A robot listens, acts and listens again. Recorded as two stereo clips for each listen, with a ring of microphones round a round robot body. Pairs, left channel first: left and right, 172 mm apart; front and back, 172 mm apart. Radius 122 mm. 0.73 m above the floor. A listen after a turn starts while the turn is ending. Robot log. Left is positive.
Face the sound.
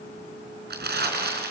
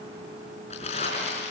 note: The crumpling: 65° right.
cmd yaw -65
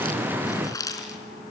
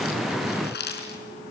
note: The crumpling is now 20° left.
cmd yaw +20
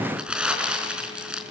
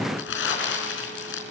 end: Facing the crumpling, over 4 m away.